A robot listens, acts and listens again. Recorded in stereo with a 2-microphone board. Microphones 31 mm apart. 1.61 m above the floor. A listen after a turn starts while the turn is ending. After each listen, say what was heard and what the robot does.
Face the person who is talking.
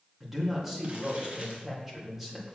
Turn 30° right.
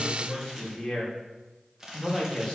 So it is at 15° left. Turn 15° left.
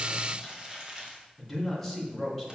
Facing the man speaking.